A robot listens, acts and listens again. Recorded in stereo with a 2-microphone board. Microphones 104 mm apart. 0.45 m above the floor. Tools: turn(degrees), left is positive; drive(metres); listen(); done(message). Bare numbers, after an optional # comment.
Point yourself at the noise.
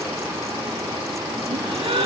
# The gasp: about 55° right or 125° right.
turn(-55)
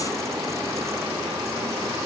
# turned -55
listen()
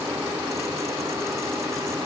done("I heard a gasp, but can't make it out now. It was about straight ahead or 70° right.")